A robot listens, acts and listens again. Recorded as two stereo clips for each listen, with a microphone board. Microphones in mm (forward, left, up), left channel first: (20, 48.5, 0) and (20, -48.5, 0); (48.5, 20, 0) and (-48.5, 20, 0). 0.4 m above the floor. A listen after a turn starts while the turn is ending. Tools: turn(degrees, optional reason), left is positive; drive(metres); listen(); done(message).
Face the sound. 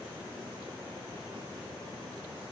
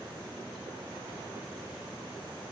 listen()
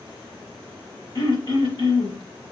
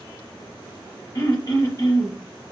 turn(degrees=50, reason="The throat clearing: 50° left.")
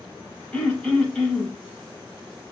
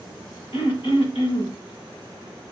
turn(degrees=15, reason="The throat clearing is now 15° left.")
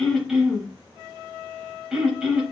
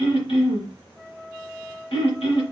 done("Facing the throat clearing, under 1 m away.")